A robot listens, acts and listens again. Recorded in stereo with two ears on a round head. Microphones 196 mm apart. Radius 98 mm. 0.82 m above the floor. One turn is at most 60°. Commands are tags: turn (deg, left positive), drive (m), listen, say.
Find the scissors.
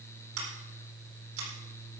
<turn deg="-60"/>
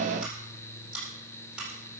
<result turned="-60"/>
<say>Found it: scissors, straight ahead, over 4 m away.</say>